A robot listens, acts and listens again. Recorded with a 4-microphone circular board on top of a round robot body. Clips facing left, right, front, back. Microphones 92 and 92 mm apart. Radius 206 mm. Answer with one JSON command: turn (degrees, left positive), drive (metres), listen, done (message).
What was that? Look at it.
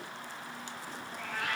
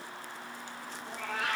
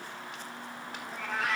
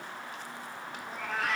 {"turn": -90}
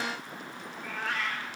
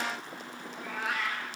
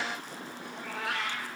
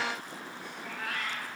{"turn": -10}
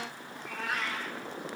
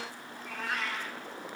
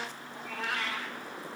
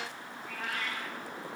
{"done": "Facing the cat meowing, 1 to 2 m away."}